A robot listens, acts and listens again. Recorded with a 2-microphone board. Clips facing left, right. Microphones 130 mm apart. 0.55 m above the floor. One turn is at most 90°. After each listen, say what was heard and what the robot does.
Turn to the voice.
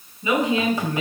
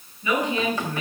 The woman speaking: about 25° left or 155° left. Turn 25° left.
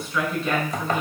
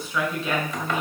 Facing the woman speaking.